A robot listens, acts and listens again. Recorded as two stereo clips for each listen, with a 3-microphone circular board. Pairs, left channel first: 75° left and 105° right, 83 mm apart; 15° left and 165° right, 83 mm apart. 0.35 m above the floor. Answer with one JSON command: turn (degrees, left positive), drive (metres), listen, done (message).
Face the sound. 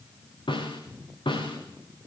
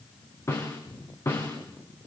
{"turn": 70}
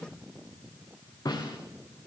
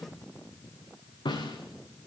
{"turn": 35}
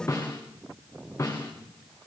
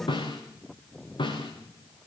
{"turn": 20}
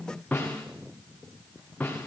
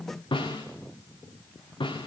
{"done": "Found it: a snare drum, straight ahead, over 4 m away."}